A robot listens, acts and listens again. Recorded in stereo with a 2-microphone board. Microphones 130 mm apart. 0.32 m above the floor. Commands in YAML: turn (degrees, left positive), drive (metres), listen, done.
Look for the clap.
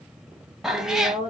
listen: true
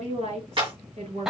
turn: -40
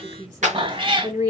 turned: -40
turn: -95
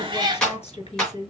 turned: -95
done: "Facing the clap."